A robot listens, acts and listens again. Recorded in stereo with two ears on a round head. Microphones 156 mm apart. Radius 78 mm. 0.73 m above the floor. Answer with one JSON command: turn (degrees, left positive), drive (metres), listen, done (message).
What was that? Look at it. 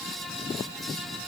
{"listen": true}
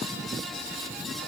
{"listen": true}
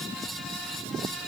{"done": "I can't make out anything to turn to."}